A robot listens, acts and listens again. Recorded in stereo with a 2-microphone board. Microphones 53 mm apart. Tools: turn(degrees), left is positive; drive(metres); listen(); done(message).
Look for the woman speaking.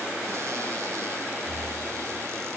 listen()
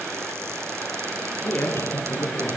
turn(degrees=40)
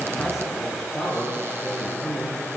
done("Found it: a woman speaking, straight ahead.")